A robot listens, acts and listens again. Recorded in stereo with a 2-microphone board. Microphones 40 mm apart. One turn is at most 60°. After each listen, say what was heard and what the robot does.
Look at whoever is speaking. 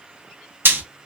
Keep listening.
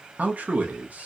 The man speaking: about 40° right or 140° right. Turn 40° right.
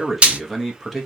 Found it: a man speaking, straight ahead.